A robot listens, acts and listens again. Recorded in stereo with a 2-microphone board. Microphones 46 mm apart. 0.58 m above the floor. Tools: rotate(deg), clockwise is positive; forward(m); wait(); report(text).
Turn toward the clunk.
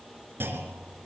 rotate(55)
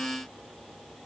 wait()
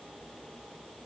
report("I heard a clunk, but can't make it out now. It was about straight ahead or 70° right.")